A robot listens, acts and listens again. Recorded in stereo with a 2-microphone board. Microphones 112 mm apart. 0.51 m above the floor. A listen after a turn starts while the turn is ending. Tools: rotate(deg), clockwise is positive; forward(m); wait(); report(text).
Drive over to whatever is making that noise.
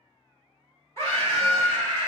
rotate(-25)
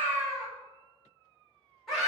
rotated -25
forward(1.0)
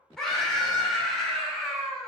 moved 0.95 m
forward(1.0)
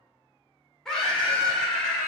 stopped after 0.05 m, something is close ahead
report("I am next to the scream.")